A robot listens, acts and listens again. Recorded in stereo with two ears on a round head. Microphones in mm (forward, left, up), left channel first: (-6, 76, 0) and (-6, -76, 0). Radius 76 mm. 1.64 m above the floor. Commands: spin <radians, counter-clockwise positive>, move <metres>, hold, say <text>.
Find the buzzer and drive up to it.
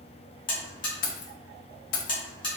spin 0.52
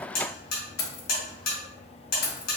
spin 2.09
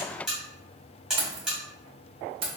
move 1.0
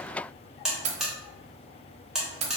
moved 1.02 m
move 1.0
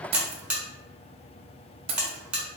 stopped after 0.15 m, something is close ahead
say Arrived at the buzzer, straight ahead.